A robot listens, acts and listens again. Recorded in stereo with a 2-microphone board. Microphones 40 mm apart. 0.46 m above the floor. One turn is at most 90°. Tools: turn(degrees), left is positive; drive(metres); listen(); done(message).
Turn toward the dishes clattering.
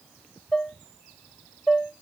turn(degrees=30)
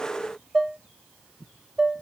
turn(degrees=-15)
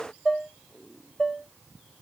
done("Facing the dishes clattering.")